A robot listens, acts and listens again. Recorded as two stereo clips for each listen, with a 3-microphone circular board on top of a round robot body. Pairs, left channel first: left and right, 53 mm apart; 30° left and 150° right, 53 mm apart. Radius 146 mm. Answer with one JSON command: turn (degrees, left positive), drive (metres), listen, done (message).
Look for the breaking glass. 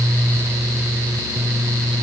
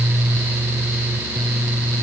{"listen": true}
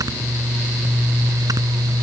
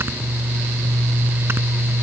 {"listen": true}
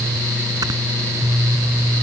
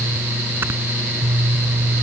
{"done": "I can't make out breaking glass to turn to."}